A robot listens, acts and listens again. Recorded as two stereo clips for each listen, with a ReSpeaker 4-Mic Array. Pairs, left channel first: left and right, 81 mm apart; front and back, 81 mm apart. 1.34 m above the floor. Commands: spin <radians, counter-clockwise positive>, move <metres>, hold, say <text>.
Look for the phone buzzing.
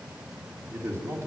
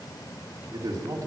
hold
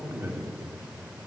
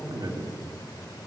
hold
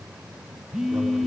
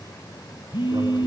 say Facing the phone buzzing.